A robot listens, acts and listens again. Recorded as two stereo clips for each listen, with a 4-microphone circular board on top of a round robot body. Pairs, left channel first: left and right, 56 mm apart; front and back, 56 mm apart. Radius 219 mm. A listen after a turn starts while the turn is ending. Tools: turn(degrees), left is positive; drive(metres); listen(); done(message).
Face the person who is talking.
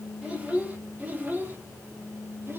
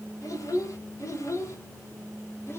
turn(degrees=-45)
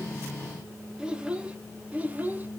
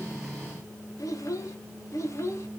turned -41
turn(degrees=-35)
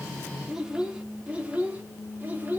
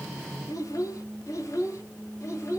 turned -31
turn(degrees=-30)
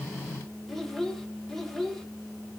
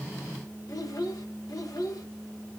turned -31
done("Facing the child speaking.")